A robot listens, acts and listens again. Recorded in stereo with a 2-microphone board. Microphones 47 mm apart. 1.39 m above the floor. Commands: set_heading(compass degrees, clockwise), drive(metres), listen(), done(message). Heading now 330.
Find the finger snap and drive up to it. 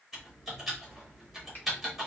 set_heading(295)
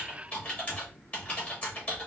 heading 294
listen()
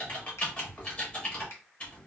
set_heading(184)
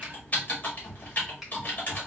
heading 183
drive(1.0)
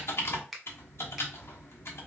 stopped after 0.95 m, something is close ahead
done("I am next to the finger snap.")